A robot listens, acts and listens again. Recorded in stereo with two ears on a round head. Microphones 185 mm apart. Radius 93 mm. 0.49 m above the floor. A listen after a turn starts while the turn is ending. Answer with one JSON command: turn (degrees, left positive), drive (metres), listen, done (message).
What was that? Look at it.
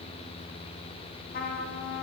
{"turn": 45}
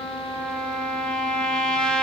{"done": "Found it: a trumpet, straight ahead, under 1 m away."}